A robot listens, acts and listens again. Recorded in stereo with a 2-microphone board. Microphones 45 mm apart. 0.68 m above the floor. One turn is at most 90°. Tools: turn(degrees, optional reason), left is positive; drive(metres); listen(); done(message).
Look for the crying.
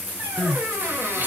turn(degrees=-50, reason="The crying: about 50° right or 130° right.")
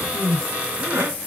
turn(degrees=-75, reason="So it is at 75° right.")
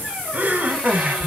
turn(degrees=-35, reason="The crying is now 35° right.")
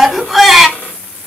done("Found it: crying, straight ahead.")